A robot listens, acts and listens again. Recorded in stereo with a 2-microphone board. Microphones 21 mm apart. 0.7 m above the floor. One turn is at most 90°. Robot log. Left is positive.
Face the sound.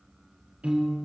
cmd yaw -90
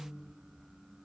cmd idle
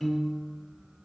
note: The piano is now 10° right.
cmd yaw -10
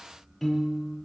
end: Found it: a piano, straight ahead.